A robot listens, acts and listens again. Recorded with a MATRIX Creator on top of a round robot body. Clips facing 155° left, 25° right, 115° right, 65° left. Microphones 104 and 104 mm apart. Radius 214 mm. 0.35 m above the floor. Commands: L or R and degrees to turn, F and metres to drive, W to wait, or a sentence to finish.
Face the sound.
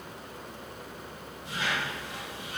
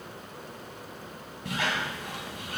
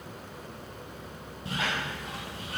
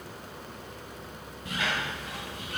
R55
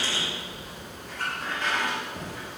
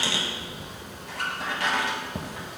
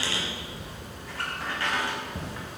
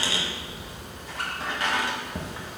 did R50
Facing the squeak, 1 to 2 m away.